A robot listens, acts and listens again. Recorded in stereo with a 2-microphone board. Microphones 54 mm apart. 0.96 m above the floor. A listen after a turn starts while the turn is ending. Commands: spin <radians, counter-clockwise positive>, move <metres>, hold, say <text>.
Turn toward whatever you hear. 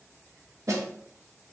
spin -1.31
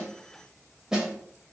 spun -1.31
spin -0.26
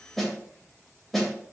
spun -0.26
say Found it: a snare drum, straight ahead.